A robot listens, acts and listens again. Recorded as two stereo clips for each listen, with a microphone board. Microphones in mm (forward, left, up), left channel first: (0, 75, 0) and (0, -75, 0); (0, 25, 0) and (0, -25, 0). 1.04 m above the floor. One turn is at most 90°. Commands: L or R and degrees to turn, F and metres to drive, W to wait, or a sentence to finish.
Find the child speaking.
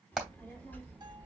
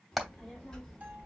L30
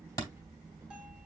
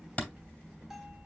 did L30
R20
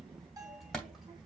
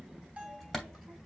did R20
Facing the child speaking, 2 to 4 m away.